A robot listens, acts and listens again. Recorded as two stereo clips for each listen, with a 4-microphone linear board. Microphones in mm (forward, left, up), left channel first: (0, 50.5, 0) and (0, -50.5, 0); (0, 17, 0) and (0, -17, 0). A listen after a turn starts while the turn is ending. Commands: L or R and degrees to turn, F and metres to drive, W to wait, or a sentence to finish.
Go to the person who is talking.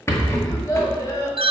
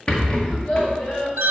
L35
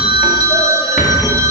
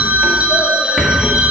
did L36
W
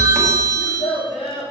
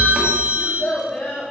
L110
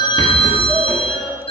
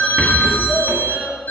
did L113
W
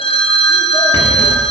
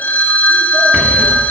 W
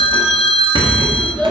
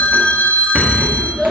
F1.0
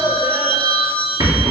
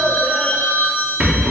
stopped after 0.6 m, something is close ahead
W
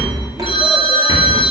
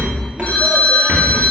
W
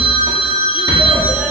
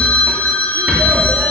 I heard a child speaking from this way, but can't make it out now. I did not reach it.